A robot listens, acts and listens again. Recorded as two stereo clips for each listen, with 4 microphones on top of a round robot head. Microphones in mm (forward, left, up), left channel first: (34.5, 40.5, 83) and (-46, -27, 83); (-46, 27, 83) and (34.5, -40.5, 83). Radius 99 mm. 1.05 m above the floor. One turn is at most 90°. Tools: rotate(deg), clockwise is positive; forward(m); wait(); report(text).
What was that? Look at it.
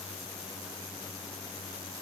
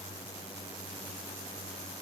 wait()
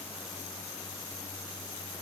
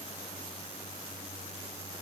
wait()
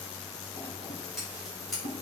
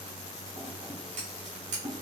rotate(50)
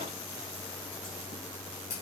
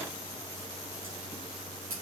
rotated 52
report("Facing the scissors.")